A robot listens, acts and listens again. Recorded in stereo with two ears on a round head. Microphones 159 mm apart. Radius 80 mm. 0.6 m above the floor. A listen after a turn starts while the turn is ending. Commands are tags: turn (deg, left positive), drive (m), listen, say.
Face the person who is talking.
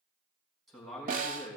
<turn deg="30"/>
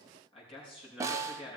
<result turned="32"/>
<turn deg="150"/>
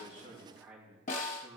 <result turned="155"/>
<turn deg="-10"/>
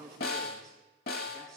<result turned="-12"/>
<say>Found it: a man speaking, straight ahead, over 4 m away.</say>